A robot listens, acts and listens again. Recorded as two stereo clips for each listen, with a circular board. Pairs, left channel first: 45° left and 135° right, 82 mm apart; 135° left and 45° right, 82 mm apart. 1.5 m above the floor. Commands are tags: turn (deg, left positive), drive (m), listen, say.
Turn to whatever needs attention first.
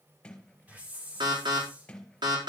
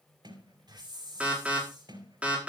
<turn deg="-120"/>
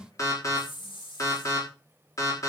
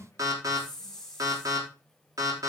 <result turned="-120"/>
<say>Found it: an alarm, straight ahead, over 4 m away.</say>